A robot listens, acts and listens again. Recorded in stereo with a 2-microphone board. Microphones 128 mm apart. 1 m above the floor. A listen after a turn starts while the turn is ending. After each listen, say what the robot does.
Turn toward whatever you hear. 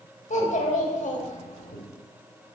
Turn 70° left.
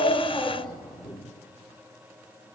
Facing the child speaking, 1 to 2 m away.